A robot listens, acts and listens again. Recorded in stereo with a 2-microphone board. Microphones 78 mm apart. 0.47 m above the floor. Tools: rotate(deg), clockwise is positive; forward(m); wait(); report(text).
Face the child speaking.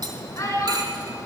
rotate(-45)
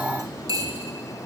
wait()
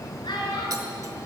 rotate(-80)
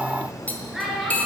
report("Facing the child speaking, over 4 m away.")